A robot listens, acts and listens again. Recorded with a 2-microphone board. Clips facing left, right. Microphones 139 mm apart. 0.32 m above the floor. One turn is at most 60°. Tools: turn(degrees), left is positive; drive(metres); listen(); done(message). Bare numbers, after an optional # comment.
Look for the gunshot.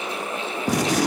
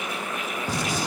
turn(60)
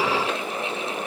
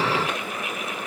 # Nothing new. It was at 30° left.
turn(30)
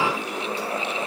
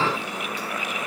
done("I heard a gunshot from this way, but can't make it out now.")